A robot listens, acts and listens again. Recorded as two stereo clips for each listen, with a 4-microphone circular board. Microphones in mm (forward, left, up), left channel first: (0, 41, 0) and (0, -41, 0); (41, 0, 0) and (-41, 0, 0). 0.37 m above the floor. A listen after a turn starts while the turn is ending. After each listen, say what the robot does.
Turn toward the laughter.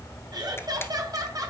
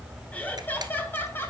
Turn 60° right.
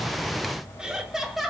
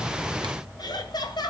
Facing the laughter, 1 to 2 m away.